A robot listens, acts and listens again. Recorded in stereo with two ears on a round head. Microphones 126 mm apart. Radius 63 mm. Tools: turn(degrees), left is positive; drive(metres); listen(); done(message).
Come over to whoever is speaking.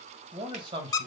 turn(degrees=-35)
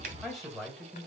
drive(metres=1.0)
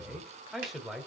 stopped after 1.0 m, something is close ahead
done("Arrived at the man speaking, straight ahead.")